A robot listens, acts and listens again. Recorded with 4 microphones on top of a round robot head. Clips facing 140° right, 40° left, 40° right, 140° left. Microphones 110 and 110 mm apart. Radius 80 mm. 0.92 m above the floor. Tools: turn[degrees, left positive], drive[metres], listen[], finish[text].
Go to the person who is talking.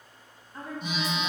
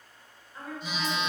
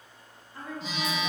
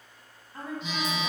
Thought: The woman speaking: 175° right.
Action: turn[-175]
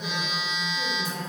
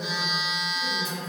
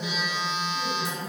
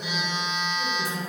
Action: listen[]
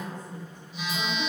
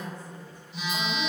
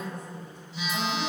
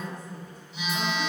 Action: listen[]
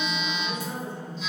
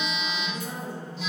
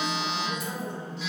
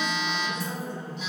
Thought: The woman speaking is now 10° right.
Action: turn[-10]
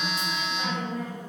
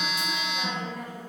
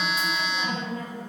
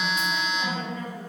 Action: drive[1.0]
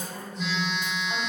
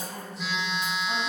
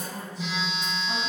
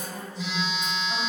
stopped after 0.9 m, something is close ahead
Thought: The woman speaking is now 10° right.
Action: turn[-10]
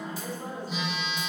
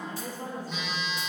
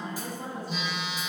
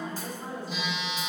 Action: finish[I am next to the woman speaking.]